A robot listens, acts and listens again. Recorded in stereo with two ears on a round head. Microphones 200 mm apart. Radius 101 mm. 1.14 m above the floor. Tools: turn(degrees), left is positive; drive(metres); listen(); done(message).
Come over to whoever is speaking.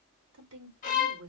turn(degrees=-90)
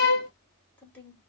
drive(metres=1.0)
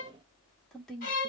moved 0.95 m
drive(metres=1.0)
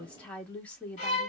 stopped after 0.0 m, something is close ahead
done("Arrived at the woman speaking, straight ahead.")